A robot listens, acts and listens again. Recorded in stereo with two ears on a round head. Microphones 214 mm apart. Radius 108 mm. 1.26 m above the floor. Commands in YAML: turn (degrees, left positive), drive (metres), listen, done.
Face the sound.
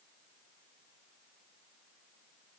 listen: true
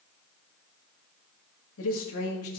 turn: 70
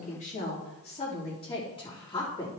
turn: 20
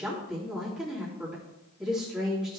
done: "Facing the woman speaking, 2 to 4 m away."